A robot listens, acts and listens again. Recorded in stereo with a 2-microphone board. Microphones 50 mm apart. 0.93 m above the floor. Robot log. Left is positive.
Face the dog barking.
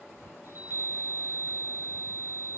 cmd idle
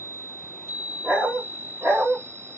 note: The dog barking: about 40° right or 140° right.
cmd yaw -40
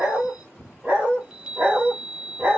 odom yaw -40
note: The dog barking: about 35° right or 145° right.
cmd yaw -35
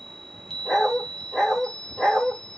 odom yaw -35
end: Found it: a dog barking, straight ahead.